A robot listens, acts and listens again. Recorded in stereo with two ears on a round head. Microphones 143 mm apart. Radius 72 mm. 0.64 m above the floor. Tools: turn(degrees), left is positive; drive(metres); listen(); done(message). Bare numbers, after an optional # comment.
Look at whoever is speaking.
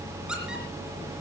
listen()
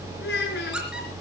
# The child speaking: about 70° left or 110° left.
turn(70)
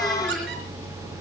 listen()
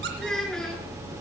done("Facing the child speaking, over 4 m away.")